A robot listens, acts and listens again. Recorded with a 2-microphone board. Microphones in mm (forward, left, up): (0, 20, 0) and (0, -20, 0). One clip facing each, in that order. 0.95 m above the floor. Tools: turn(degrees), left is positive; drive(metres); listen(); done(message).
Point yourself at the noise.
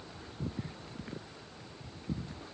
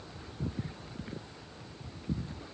listen()
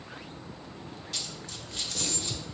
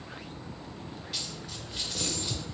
turn(degrees=-30)
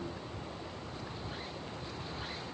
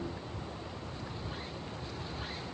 listen()
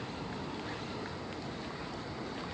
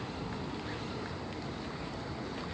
done("I heard a dropped coin, but can't make it out now. It was about 15° left or 135° right.")